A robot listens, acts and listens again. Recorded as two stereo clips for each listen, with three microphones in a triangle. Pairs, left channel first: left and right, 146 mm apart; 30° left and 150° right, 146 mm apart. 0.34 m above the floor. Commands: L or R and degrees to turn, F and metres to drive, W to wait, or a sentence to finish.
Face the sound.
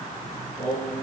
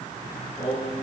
L105
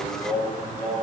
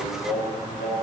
L20
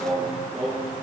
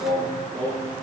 Found it: singing, straight ahead, over 4 m away.